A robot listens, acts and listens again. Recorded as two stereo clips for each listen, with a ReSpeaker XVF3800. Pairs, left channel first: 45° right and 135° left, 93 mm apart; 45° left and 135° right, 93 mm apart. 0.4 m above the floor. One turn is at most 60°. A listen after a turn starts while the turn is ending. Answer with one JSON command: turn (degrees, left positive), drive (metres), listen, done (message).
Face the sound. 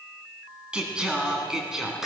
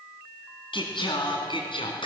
{"turn": 50}
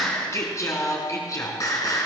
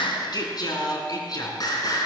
{"done": "Found it: singing, straight ahead."}